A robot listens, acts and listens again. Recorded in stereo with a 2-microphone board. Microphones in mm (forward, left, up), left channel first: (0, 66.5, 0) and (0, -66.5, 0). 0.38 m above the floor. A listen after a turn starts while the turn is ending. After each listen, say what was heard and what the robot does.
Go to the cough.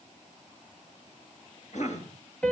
The cough: about 65° left or 115° left. Turn 65° left.
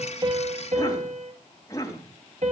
So it is at 30° left. Turn 30° left.
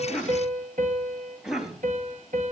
Drive 1.0 m forward.
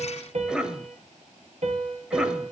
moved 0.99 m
The cough is now 10° right. Turn 10° right.
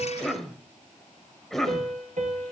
Drive 1.0 m forward.
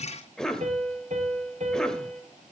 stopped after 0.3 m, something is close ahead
Arrived at the cough, straight ahead.